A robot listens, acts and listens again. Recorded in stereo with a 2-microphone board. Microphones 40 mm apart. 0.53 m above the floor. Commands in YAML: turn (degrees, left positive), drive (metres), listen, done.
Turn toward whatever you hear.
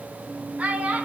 turn: -35
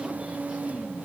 listen: true
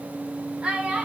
turn: -15
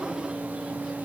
listen: true
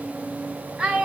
turn: -15
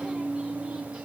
listen: true
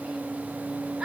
listen: true
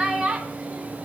turn: -15
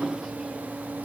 listen: true
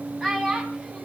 done: "Found it: a child speaking, straight ahead, 2 to 4 m away."